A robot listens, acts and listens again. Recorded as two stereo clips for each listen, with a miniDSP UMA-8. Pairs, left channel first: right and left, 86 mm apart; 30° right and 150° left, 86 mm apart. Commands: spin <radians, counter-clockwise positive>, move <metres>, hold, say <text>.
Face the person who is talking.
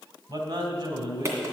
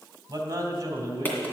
spin 1.83
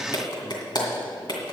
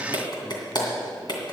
hold
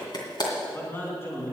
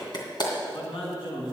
spin -0.52
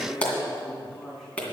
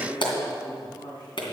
say Facing the man speaking, 2 to 4 m away.